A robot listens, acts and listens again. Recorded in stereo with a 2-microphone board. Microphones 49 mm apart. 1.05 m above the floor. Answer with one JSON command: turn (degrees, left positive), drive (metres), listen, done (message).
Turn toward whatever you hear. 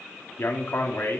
{"turn": 50}
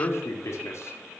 {"turn": 75}
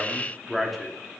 {"done": "Found it: a man speaking, straight ahead, 2 to 4 m away."}